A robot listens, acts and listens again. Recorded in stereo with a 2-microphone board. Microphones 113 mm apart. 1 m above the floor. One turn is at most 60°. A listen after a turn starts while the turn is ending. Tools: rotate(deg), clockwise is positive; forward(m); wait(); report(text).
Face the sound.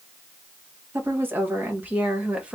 rotate(30)
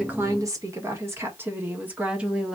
rotate(30)
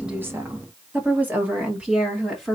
rotate(30)
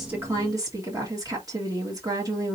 rotate(60)
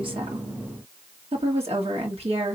rotate(60)
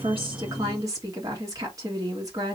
rotate(30)
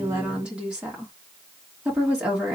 rotate(10)
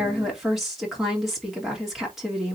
report("Found it: a woman speaking, straight ahead, 1 to 2 m away.")